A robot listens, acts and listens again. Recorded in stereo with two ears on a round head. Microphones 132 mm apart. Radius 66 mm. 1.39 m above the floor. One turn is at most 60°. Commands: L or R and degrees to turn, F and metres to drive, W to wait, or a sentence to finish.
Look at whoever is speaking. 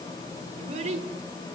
R45
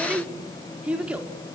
R10
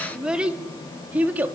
R10
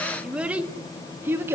R15
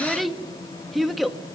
Found it: a child speaking, straight ahead.